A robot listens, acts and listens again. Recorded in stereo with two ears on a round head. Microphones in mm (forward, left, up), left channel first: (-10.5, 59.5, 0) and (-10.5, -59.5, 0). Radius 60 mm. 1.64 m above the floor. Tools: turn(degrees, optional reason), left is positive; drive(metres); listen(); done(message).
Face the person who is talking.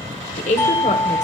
turn(degrees=60, reason="The woman speaking: about 60° left or 120° left.")
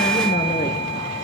listen()
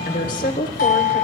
turn(degrees=65, reason="So it is at 65° left.")
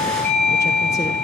listen()
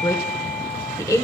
turn(degrees=20, reason="The woman speaking is now 20° left.")
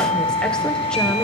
listen()
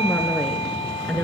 done("Found it: a woman speaking, straight ahead.")